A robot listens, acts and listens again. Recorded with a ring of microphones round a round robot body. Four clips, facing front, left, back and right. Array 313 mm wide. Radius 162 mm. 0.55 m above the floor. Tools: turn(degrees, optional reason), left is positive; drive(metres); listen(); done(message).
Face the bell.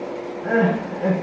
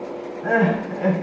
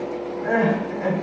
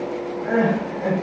listen()
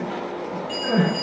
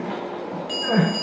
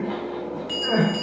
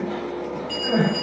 turn(degrees=135, reason="The bell: 135° left.")
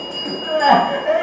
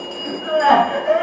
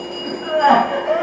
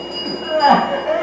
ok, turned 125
turn(degrees=10, reason="The bell is now 10° left.")
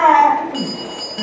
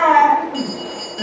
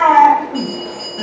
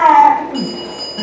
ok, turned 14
done("Facing the bell.")